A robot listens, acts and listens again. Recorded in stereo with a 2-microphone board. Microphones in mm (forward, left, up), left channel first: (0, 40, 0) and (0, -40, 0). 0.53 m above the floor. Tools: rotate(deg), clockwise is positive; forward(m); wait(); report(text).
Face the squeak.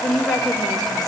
wait()
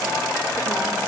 wait()
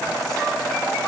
report("I can't make out a squeak to turn to.")